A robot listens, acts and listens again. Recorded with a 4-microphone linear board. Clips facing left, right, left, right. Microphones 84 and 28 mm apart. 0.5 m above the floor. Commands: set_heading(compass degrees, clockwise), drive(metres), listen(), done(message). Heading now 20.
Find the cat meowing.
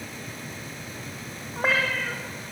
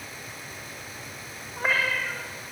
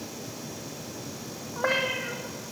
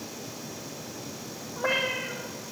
set_heading(290)
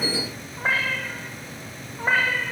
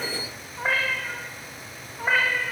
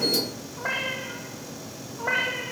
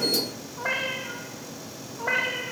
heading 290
set_heading(275)
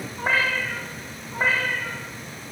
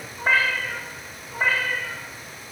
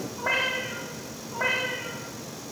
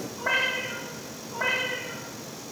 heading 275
set_heading(265)
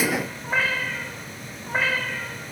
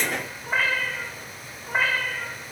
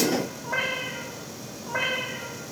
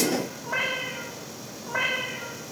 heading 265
done("Facing the cat meowing, over 4 m away.")